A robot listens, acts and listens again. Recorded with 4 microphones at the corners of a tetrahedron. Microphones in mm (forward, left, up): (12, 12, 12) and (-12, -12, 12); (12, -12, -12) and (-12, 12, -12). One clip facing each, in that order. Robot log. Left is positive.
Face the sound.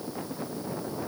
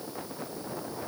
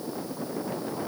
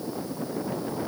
cmd idle
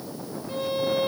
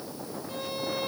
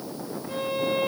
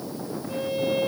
note: The violin: 30° right.
cmd yaw -30
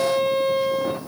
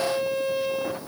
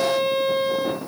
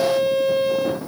note: The violin is now 15° left.
cmd yaw +15
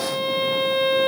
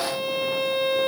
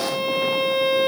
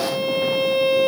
end: Facing the violin, 2 to 4 m away.